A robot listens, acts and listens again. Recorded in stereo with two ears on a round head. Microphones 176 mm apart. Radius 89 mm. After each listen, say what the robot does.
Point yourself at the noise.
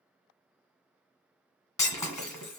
Turn 15° left.
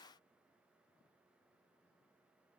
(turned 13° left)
Keep listening.
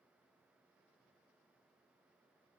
I heard breaking glass, but can't make it out now. It was about 5° left or 150° left.